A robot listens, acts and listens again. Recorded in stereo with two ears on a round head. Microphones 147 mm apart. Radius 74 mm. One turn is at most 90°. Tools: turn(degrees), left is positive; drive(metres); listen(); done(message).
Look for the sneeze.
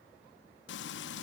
listen()
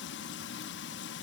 listen()
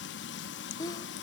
turn(degrees=20)
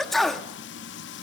done("Found it: a sneeze, straight ahead.")